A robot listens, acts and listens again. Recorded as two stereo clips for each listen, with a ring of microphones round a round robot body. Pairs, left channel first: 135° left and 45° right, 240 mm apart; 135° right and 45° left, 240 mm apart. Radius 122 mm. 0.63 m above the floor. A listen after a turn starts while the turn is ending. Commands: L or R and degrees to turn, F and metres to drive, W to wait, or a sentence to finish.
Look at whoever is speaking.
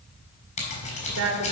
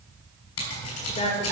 R70
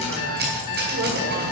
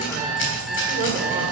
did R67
W
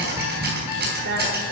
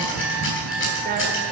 Facing the woman speaking, 2 to 4 m away.